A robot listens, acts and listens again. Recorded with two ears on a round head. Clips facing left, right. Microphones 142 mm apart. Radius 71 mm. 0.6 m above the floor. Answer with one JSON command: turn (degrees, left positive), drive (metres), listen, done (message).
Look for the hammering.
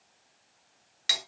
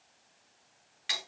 {"listen": true}
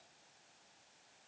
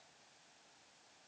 {"listen": true}
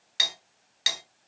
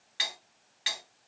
{"done": "I can't make out hammering, only cutlery clinking."}